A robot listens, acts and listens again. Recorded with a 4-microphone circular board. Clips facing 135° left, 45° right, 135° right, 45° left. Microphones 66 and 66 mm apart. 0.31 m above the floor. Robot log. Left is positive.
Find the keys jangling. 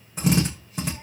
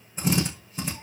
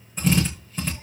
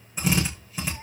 cmd idle
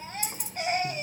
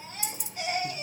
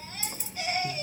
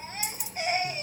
note: The keys jangling: 170° left.
cmd yaw +170
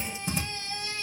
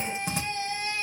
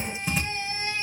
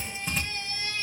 cmd idle
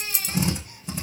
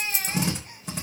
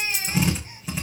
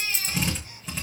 end: Found it: keys jangling, straight ahead.